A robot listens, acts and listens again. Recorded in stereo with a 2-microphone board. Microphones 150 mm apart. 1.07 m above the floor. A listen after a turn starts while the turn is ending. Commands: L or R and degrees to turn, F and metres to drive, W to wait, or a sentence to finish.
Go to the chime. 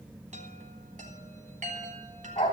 R55
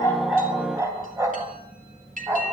R65
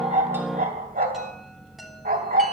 W
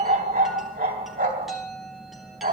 F1.0
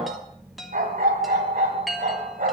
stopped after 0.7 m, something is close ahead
Something is in my way. I am facing the chime but have not reached it.